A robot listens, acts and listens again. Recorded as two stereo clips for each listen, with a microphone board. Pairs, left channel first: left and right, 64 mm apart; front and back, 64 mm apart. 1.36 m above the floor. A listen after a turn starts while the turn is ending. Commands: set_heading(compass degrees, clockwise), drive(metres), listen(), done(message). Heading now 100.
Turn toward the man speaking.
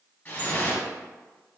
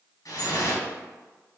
listen()
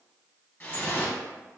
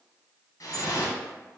listen()
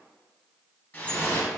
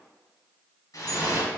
done("I can't make out a man speaking to turn to.")